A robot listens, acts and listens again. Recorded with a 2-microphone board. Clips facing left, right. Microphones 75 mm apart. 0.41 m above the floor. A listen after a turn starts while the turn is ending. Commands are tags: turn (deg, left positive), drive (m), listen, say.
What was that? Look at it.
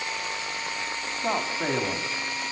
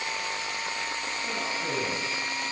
<turn deg="65"/>
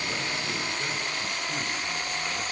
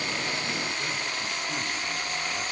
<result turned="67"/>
<listen/>
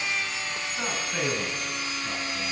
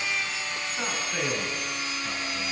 <say>Found it: a man speaking, straight ahead.</say>